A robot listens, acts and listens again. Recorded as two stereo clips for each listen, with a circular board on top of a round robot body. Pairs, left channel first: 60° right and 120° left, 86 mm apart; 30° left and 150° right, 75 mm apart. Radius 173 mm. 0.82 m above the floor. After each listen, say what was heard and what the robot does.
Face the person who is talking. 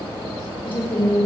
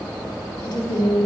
Found it: a woman speaking, straight ahead.